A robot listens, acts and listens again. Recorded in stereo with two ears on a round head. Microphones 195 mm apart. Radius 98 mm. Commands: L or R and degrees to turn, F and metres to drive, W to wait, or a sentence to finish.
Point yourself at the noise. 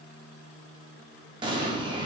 R20
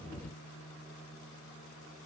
W
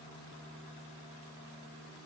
I heard an explosion, but can't make it out now. It was about straight ahead or 140° right.